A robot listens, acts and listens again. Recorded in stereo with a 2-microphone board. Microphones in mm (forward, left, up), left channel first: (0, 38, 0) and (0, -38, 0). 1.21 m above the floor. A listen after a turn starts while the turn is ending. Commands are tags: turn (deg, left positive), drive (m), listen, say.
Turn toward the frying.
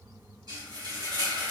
<turn deg="-60"/>
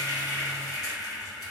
<turn deg="-10"/>
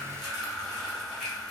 <say>Found it: frying, straight ahead.</say>